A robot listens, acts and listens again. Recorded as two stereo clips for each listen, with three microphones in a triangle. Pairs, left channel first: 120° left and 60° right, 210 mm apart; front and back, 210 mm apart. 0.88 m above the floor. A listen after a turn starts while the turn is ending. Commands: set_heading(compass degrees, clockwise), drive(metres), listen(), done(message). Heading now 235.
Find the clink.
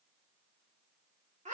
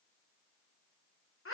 listen()
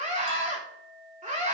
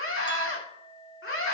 set_heading(305)
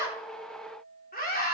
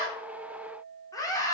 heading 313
set_heading(303)
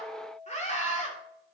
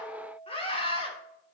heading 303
done("Found it: a clink, straight ahead.")